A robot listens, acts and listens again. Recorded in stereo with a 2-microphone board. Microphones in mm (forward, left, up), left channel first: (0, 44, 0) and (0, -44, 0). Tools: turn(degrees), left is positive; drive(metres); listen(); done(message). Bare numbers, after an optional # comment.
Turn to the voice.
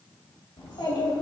# The child speaking: about 70° left or 110° left.
turn(70)
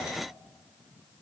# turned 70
listen()
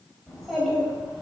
done("Facing the child speaking, 2 to 4 m away.")